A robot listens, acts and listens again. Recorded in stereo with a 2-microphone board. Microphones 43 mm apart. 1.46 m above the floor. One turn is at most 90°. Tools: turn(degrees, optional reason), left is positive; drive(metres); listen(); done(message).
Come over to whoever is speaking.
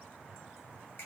listen()
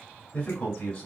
turn(degrees=25, reason="The man speaking: about 25° left or 155° left.")
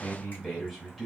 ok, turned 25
drive(metres=1.0)
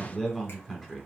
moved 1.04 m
drive(metres=1.0)
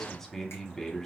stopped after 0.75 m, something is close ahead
turn(degrees=10, reason="The man speaking is now 10° left.")
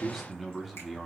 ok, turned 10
done("I am next to the man speaking.")